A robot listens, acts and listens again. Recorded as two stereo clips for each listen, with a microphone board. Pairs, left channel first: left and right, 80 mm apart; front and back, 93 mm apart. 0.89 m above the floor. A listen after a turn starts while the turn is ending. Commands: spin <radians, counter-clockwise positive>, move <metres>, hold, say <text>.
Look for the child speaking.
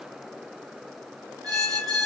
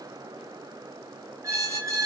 hold
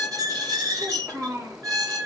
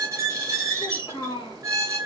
spin -0.61
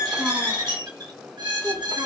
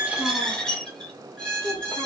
spin -0.44
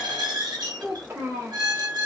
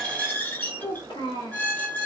spin -0.52
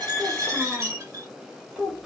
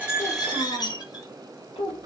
say Facing the child speaking, 1 to 2 m away.